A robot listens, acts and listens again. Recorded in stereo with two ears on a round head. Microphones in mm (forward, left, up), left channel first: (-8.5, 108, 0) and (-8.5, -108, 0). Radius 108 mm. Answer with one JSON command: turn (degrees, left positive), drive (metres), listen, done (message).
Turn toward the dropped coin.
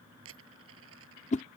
{"turn": -60}
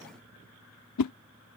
{"listen": true}
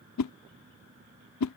{"done": "I heard a dropped coin, but can't make it out now. It was about straight ahead or 60° right."}